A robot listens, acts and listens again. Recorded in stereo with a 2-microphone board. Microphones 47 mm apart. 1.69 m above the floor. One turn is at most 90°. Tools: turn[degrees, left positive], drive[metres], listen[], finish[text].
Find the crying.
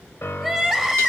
Action: turn[-30]
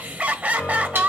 Thought: So it is at 140° right.
Action: turn[-90]
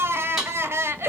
Thought: The crying is now 85° right.
Action: turn[-85]
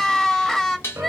Thought: The crying is now 15° left.
Action: turn[15]
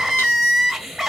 Action: finish[Found it: crying, straight ahead.]